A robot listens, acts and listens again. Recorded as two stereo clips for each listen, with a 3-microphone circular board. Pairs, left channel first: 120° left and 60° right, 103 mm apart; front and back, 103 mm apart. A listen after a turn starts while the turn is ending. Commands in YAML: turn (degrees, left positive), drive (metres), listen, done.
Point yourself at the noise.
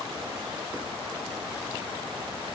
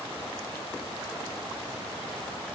listen: true
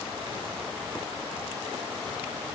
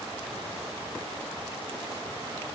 listen: true
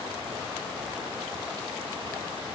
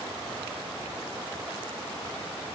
done: "I can't make out anything to turn to."